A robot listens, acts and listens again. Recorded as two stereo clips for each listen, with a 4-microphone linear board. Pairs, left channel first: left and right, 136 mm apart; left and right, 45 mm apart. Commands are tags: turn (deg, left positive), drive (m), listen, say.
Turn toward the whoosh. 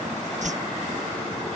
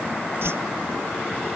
<turn deg="-65"/>
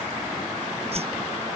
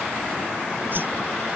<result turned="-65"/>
<turn deg="-50"/>
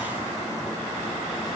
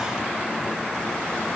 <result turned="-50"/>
<listen/>
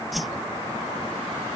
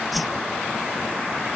<say>Facing the whoosh.</say>